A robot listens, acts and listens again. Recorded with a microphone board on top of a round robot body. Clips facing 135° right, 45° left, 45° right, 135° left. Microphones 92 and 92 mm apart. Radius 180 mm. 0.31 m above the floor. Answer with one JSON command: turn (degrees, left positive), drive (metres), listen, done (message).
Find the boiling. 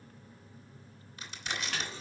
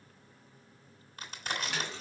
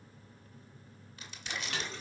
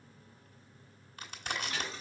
{"turn": 45}
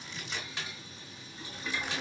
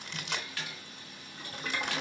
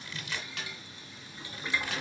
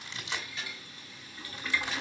{"turn": 20}
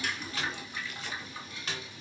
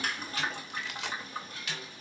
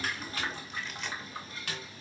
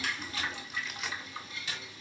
{"done": "Facing the boiling."}